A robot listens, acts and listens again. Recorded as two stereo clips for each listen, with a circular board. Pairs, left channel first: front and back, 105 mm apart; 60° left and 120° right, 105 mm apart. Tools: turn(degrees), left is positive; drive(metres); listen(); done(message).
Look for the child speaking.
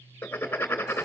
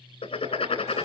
listen()
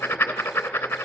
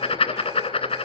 listen()
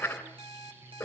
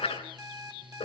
done("I can't make out a child speaking to turn to.")